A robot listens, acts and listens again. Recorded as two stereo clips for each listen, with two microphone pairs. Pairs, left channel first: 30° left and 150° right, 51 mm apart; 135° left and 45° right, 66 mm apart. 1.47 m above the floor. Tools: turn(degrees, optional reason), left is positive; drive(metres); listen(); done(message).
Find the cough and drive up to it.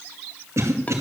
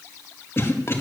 turn(degrees=-170, reason="The cough: 170° right.")
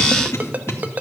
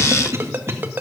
drive(metres=1.0)
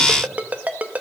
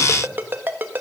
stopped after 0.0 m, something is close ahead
listen()
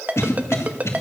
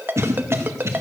done("Something is in my way. I am facing the cough but have not reached it.")